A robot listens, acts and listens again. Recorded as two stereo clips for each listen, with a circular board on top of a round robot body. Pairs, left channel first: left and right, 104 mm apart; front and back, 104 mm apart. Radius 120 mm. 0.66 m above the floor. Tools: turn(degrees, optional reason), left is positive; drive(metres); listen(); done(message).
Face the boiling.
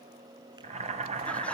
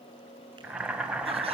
turn(degrees=-100, reason="The boiling: 100° right.")
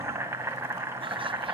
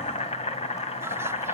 turn(degrees=-20, reason="The boiling is now 20° right.")
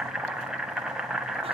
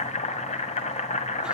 done("Found it: boiling, straight ahead.")